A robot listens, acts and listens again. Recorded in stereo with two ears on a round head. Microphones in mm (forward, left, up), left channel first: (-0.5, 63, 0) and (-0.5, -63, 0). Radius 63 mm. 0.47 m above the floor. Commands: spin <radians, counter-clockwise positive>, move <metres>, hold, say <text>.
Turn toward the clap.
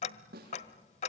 hold
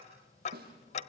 hold
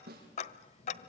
say I can't make out a clap to turn to.